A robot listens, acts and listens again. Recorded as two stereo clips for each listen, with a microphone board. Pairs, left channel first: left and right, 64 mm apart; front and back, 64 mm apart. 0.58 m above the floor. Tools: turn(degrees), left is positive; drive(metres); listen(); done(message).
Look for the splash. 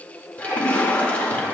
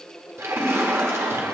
turn(degrees=150)
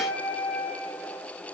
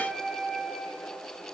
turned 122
turn(degrees=25)
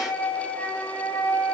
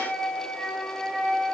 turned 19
done("Facing where the splash came from. I can't hear it now.")